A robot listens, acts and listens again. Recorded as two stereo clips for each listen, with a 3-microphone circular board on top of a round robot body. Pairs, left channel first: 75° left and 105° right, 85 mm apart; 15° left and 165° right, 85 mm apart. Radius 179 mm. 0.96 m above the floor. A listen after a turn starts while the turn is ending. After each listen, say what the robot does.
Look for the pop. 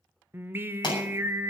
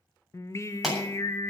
Turn 110° left.
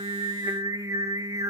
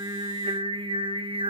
Facing where the pop came from. I can't hear it now.